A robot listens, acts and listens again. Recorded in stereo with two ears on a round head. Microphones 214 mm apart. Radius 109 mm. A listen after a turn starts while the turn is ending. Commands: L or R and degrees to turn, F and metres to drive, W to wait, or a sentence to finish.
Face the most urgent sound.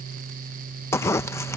W
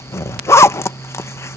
W
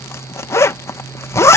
I can't make out anything urgent to turn to.